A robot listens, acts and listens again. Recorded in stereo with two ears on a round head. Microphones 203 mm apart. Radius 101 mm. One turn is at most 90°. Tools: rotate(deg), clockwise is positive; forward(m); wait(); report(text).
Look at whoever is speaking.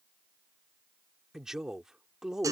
rotate(-30)
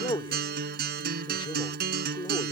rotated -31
rotate(-90)
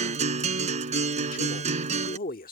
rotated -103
rotate(-50)
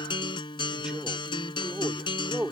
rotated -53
report("Facing the man speaking.")